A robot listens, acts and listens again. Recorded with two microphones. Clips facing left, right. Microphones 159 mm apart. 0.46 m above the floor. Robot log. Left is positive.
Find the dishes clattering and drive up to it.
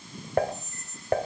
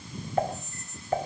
note: The dishes clattering: about 65° left or 115° left.
cmd yaw +65
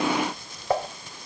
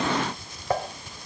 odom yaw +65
cmd fwd 1.0
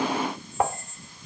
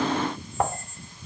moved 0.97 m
cmd fwd 1.0
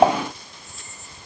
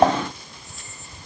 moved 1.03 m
cmd fwd 1.0
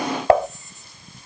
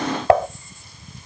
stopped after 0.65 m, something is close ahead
end: Arrived at the dishes clattering, straight ahead.